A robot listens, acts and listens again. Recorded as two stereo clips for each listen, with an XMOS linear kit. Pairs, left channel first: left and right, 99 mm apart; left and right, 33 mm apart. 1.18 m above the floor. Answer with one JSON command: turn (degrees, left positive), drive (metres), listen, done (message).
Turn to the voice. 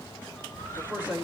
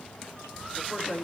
{"turn": 45}
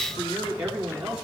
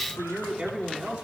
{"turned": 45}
{"turn": -10}
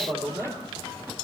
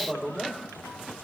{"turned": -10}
{"done": "Found it: a man speaking, straight ahead."}